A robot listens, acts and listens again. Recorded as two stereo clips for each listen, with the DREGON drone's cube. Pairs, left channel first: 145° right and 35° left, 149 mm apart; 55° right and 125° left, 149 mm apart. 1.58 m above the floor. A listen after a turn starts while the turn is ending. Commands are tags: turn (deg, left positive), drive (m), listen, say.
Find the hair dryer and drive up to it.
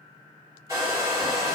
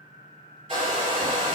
<turn deg="100"/>
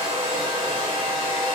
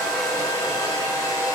<drive m="1.0"/>
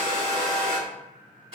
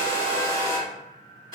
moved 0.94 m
<drive m="1.0"/>
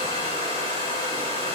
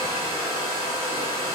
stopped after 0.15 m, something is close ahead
<say>I am next to the hair dryer.</say>